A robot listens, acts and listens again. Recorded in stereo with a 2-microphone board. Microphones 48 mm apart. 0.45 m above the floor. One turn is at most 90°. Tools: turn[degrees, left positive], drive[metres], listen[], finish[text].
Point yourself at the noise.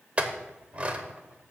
Thought: The clink: about 30° right or 150° right.
Action: turn[-30]
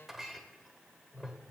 Action: finish[Facing the clink, under 1 m away.]